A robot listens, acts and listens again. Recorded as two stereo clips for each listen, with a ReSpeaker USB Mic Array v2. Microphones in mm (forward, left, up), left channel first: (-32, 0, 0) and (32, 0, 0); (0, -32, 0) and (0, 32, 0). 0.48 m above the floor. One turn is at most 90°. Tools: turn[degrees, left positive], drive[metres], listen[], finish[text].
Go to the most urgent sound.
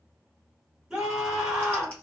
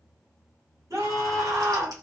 Thought: The scream: 75° left.
Action: turn[75]
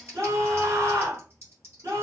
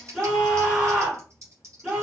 Thought: The scream is now 15° left.
Action: turn[15]
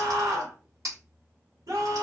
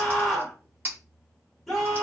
Action: drive[1.0]
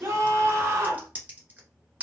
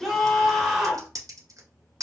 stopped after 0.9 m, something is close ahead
Action: finish[I am next to the scream.]